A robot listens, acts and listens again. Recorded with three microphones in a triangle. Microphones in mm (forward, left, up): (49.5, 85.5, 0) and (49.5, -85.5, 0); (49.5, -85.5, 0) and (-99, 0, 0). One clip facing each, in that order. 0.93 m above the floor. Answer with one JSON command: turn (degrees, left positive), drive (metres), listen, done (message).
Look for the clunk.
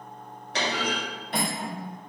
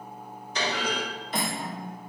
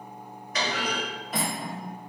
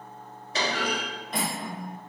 {"turn": 90}
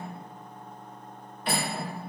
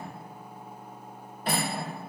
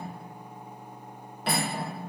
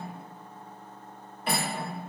{"done": "Facing where the clunk came from. I can't hear it now."}